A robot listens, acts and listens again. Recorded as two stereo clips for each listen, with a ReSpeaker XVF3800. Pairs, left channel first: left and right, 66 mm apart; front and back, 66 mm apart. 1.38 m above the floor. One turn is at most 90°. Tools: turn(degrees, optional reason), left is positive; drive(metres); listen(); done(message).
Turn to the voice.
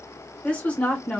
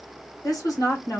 turn(degrees=20, reason="The woman speaking: 20° left.")
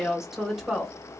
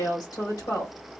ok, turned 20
done("Found it: a woman speaking, straight ahead, 1 to 2 m away.")